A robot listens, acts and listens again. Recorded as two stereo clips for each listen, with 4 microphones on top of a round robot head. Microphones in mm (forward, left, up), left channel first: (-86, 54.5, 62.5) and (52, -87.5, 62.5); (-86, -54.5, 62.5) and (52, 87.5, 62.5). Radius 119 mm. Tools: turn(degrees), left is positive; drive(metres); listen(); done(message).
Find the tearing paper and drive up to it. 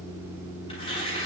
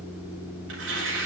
turn(degrees=65)
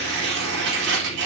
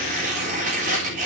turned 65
turn(degrees=-10)
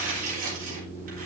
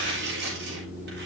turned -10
drive(metres=1.0)
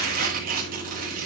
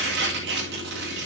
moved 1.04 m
drive(metres=1.0)
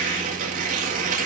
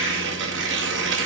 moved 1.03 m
turn(degrees=10)
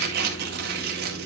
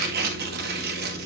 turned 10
drive(metres=1.0)
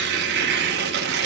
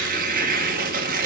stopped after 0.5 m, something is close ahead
done("I am next to the tearing paper.")